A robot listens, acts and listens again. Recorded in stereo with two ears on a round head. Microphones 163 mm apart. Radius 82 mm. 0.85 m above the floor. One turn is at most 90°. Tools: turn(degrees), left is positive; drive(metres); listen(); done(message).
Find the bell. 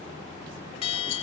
turn(degrees=30)
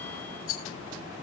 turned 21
listen()
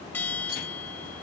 turn(degrees=10)
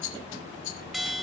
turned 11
done("Facing the bell.")